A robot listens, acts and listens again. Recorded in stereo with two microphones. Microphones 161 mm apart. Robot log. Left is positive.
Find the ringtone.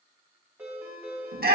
cmd yaw -30
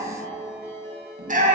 note: So it is at 15° left.
cmd yaw +15
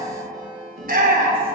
end: Found it: a ringtone, straight ahead.